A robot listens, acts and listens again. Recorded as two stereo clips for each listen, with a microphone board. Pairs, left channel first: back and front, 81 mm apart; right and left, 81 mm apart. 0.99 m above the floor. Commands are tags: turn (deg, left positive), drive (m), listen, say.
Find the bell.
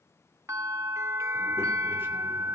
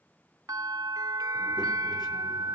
<turn deg="50"/>
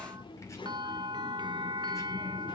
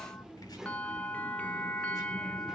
<turn deg="-20"/>
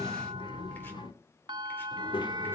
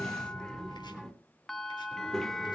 <say>Found it: a bell, straight ahead, under 1 m away.</say>